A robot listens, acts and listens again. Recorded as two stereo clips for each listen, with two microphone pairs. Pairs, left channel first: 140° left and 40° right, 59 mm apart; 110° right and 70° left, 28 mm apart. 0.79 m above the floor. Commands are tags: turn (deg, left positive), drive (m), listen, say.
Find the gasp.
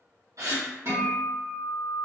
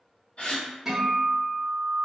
<turn deg="-70"/>
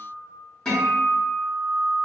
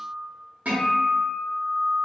<say>I heard a gasp from this way, but can't make it out now.</say>